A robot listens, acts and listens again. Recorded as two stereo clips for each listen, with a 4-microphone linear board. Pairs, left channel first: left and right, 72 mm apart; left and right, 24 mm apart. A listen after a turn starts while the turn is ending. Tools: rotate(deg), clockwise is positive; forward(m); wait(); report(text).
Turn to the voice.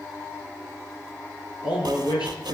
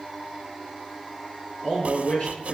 rotate(-70)
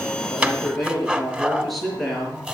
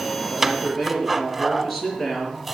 report("Facing the man speaking, over 4 m away.")